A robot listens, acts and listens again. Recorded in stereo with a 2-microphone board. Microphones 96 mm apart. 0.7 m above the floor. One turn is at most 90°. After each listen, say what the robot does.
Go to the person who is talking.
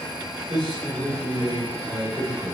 Turn 65° right.
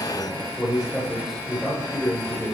Drive 1.0 m forward.
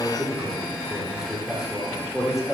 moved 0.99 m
Drive 1.0 m forward.
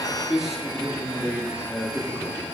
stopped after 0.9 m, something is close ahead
I am next to the man speaking.